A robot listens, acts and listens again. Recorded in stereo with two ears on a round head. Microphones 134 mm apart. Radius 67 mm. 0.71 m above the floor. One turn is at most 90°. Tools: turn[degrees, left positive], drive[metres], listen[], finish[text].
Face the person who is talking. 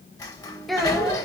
Action: turn[30]
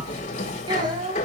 Thought: So it is at 30° right.
Action: turn[-30]
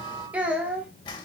Thought: The child speaking is now 10° right.
Action: turn[-10]
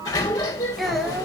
Action: listen[]
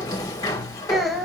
Action: finish[Found it: a child speaking, straight ahead.]